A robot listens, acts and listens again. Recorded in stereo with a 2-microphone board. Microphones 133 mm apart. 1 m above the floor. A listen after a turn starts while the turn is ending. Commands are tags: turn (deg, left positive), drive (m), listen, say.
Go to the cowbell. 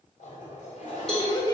<turn deg="30"/>
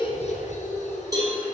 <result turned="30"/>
<turn deg="-30"/>
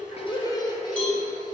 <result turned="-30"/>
<turn deg="10"/>
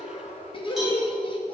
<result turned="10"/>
<drive m="1.0"/>
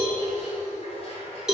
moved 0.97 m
<drive m="1.0"/>
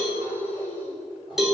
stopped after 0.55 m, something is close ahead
<say>Arrived at the cowbell, straight ahead.</say>